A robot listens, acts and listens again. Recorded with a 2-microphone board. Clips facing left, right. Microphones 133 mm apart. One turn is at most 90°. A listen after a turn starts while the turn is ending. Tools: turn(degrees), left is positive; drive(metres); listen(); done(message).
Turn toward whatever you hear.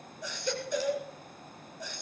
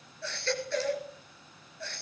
turn(degrees=30)
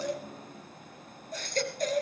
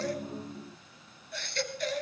turn(degrees=90)
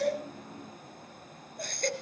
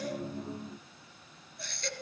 turn(degrees=50)
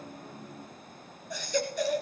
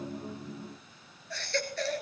turn(degrees=15)
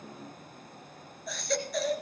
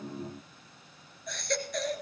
done("Facing the baby crying.")